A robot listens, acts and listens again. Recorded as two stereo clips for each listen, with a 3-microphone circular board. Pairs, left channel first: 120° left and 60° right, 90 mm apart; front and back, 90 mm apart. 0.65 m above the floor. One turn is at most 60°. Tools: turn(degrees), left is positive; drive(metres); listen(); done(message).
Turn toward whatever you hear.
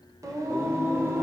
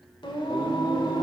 done("Facing the singing.")